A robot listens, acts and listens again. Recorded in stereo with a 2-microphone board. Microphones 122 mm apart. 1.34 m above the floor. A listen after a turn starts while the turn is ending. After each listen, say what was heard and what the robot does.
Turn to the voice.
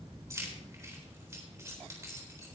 Keep listening.
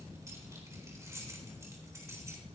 Keep listening.
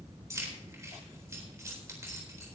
I can't make out anyone speaking, only keys jangling.